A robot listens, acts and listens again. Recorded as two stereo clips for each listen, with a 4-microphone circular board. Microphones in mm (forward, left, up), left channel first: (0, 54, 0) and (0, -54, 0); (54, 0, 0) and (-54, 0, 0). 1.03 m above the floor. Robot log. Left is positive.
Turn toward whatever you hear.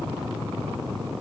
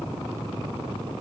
cmd idle
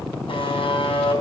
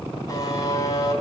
note: The buzzer: 55° left.
cmd yaw +55
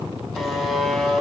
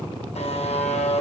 end: Found it: a buzzer, straight ahead, over 4 m away.